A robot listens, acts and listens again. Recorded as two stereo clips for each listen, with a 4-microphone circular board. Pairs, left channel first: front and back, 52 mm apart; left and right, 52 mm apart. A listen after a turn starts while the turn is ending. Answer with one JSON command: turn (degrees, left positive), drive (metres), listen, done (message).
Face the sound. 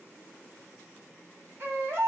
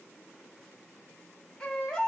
{"turn": 160}
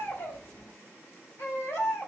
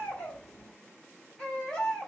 {"turn": 20}
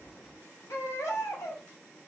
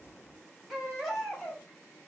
{"done": "Found it: a baby crying, straight ahead."}